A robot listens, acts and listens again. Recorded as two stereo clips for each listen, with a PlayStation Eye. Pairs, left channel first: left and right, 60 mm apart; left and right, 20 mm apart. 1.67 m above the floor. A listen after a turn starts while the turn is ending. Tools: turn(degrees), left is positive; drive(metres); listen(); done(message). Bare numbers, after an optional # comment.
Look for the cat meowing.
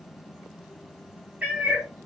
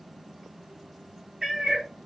# The cat meowing: about 25° right or 155° right.
turn(-25)
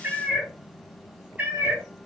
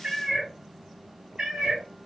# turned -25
# The cat meowing: about 25° right or 155° right.
turn(-25)
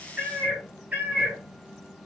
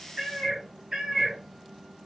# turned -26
# The cat meowing: about 30° right or 150° right.
turn(-30)
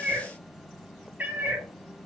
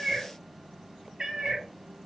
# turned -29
# The cat meowing: about 25° right or 155° right.
turn(-25)
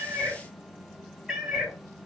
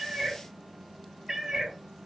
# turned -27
done("Found it: a cat meowing, straight ahead.")